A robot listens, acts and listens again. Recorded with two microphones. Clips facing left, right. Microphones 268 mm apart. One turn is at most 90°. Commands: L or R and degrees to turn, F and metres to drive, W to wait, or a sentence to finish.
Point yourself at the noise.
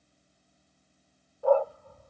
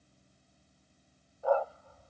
L60
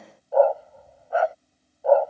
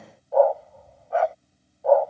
Facing the dog barking.